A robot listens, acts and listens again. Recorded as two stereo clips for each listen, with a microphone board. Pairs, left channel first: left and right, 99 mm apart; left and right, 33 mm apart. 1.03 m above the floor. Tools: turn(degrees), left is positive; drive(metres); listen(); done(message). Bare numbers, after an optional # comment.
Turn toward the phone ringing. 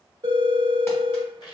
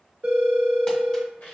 # The phone ringing: about 45° right or 135° right.
turn(-45)
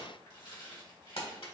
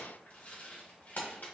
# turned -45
listen()
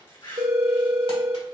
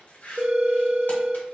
# So it is at 90° right.
turn(-90)
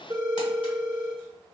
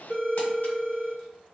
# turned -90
# The phone ringing is now 35° right.
turn(-35)
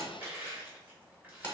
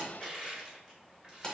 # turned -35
listen()
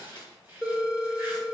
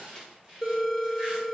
done("Facing the phone ringing, 1 to 2 m away.")